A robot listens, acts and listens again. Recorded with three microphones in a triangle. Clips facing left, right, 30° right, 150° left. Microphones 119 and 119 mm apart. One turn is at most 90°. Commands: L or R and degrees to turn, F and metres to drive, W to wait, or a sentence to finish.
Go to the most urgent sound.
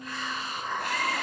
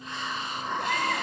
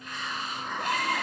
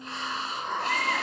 R90
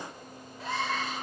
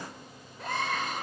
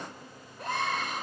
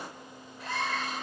F1.0
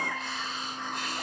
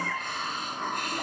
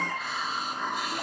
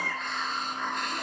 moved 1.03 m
F1.0
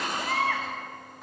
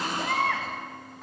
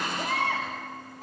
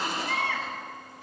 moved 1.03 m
F1.0
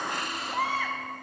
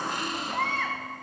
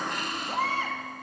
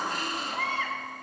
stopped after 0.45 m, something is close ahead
L10
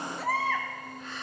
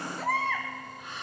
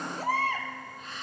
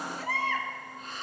I am next to the baby crying.